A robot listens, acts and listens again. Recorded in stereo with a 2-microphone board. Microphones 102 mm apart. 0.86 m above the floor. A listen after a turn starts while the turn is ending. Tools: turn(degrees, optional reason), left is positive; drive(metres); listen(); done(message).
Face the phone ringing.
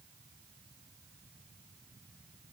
listen()
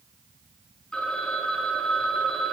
turn(degrees=30)
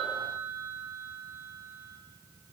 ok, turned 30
turn(degrees=-20, reason="So it is at 20° right.")
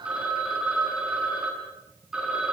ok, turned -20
turn(degrees=-10, reason="The phone ringing is now 10° right.")
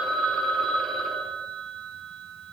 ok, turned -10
done("Facing the phone ringing.")